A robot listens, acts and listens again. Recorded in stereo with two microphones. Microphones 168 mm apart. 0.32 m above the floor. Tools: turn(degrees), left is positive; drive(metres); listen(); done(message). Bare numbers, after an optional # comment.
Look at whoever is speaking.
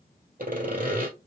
listen()
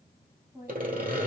# The woman speaking: about 15° right or 165° right.
turn(-15)
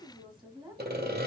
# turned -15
# So it is at 150° right.
turn(-150)
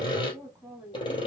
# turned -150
# The woman speaking is now 10° right.
turn(-10)
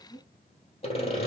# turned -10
done("Facing the woman speaking, 2 to 4 m away.")